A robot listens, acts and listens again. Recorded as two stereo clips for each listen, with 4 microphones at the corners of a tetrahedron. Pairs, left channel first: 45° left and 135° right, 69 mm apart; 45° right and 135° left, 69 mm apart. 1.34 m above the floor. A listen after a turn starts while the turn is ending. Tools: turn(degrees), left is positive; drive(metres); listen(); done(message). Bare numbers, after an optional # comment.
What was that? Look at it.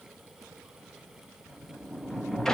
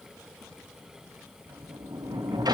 # The sliding door: 125° left.
turn(125)
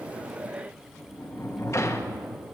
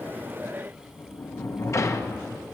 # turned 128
done("Facing the sliding door, under 1 m away.")